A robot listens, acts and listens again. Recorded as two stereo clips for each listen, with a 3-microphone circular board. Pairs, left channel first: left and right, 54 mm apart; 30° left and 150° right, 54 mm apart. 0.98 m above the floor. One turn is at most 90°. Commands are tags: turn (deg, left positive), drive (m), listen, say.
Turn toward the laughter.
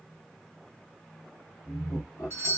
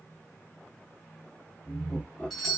<turn deg="90"/>
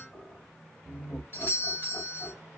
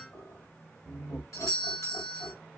<turn deg="30"/>
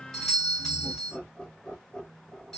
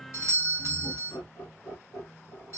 <turn deg="20"/>
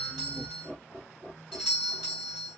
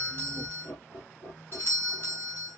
<say>Found it: laughter, straight ahead, 2 to 4 m away.</say>